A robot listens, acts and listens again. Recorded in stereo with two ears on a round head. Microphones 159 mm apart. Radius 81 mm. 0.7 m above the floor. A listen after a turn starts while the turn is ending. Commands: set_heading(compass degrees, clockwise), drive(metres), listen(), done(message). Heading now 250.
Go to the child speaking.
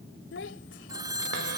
set_heading(180)
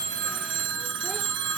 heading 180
listen()
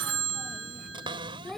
drive(1.0)
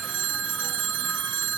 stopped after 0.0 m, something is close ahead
listen()
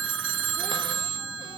listen()
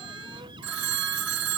done("I heard a child speaking from this way, but can't make it out now. I did not reach it.")